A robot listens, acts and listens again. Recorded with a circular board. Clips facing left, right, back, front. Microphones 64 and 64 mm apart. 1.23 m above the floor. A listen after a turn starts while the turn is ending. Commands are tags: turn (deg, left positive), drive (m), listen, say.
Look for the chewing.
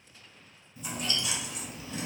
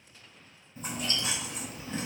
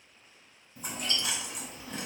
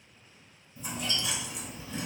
<turn deg="-140"/>
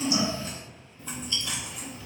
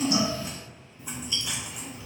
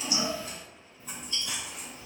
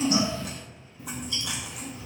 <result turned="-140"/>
<turn deg="-15"/>
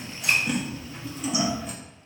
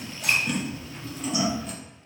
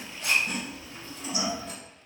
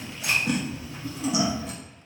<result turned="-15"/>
<say>Facing the chewing, under 1 m away.</say>